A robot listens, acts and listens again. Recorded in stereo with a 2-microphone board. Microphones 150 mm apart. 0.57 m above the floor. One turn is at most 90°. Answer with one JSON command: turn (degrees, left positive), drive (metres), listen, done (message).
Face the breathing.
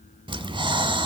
{"turn": -35}
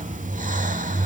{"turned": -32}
{"turn": -90}
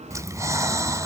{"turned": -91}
{"turn": -20}
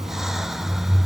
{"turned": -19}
{"done": "Found it: breathing, straight ahead."}